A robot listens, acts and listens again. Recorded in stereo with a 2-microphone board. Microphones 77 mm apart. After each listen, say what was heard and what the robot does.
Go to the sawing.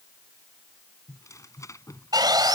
The sawing: about 60° right or 120° right. Turn 60° right.
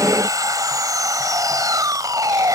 So it is at 55° right. Turn 55° right.
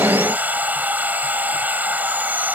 The sawing is now 25° right. Turn 25° right.
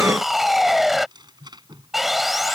Drive 1.0 m forward.
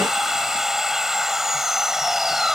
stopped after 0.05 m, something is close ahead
Something is in my way. I am facing the sawing but have not reached it.